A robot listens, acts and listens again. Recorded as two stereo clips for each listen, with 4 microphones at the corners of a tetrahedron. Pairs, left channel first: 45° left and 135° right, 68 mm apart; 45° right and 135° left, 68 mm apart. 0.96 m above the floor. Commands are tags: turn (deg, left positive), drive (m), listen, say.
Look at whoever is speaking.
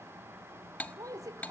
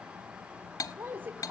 <turn deg="-165"/>
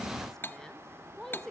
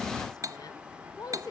<turn deg="-40"/>
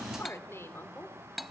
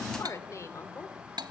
<say>Found it: a woman speaking, straight ahead, 2 to 4 m away.</say>